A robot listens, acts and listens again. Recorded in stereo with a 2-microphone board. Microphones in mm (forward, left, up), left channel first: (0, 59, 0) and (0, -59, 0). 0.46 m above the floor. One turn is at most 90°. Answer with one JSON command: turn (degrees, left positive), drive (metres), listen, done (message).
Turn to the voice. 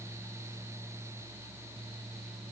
{"listen": true}
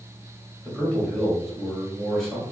{"turn": 30}
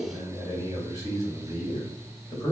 {"turn": 90}
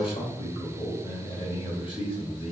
{"turn": 55}
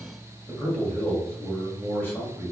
{"turn": 15}
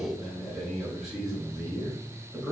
{"done": "Facing the man speaking."}